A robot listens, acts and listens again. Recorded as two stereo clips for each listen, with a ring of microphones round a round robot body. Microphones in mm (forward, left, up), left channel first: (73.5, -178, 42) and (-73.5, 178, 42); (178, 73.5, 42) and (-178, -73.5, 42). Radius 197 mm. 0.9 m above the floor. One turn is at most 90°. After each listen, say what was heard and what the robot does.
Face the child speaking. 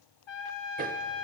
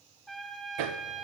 Keep listening.
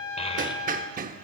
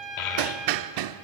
The child speaking: 10° left. Turn 10° left.
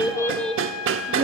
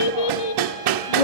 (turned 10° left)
The child speaking is now 40° left. Turn 40° left.
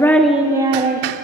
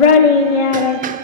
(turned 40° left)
The child speaking is now 40° left. Turn 40° left.
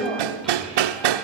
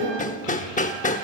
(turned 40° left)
The child speaking is now 15° left. Turn 15° left.
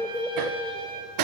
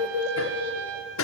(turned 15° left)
The child speaking is now 15° left. Turn 15° left.
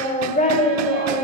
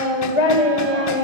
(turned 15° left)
Found it: a child speaking, straight ahead.